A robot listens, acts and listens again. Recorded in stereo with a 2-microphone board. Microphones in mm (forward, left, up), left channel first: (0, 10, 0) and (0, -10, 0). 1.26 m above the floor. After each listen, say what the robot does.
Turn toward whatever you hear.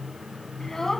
Turn 25° left.
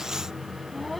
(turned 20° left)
Turn 30° left.
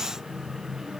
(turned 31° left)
Keep listening.
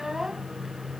Turn 20° right.
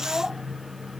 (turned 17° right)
Facing the child speaking.